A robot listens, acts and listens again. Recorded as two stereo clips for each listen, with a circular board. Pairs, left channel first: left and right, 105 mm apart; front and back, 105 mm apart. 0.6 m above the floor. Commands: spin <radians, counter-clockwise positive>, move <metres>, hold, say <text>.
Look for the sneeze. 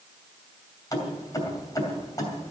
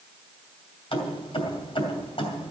hold
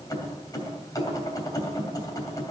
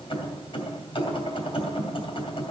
hold
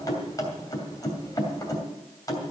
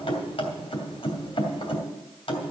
say I can't make out a sneeze, only keys jangling.